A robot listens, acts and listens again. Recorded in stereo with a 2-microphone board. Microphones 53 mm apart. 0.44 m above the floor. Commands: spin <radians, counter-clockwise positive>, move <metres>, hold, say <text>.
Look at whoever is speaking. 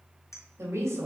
spin -0.96
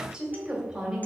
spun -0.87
spin -0.35
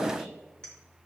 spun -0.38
hold
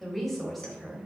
say Found it: a woman speaking, straight ahead.